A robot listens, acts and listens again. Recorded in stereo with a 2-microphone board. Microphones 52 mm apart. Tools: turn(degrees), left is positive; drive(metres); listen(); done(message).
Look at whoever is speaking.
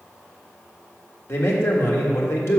turn(degrees=55)
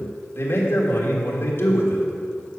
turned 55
turn(degrees=60)
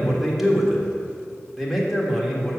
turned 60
done("Facing the man speaking.")